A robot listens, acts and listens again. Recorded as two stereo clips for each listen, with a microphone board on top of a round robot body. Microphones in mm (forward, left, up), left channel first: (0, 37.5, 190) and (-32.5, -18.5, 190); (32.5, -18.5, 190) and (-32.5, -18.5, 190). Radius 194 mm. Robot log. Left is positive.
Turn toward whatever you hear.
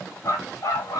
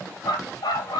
note: The dog barking: 15° left.
cmd yaw +15
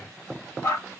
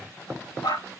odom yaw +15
end: Found it: a dog barking, straight ahead, 2 to 4 m away.